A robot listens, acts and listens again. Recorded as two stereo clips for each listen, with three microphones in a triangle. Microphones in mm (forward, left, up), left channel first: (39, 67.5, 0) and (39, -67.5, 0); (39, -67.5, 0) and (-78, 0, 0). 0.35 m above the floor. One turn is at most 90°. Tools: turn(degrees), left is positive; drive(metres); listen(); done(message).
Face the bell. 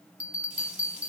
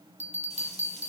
turn(degrees=-90)
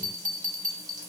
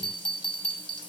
turn(degrees=-80)
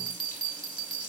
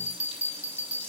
done("Found it: a bell, straight ahead.")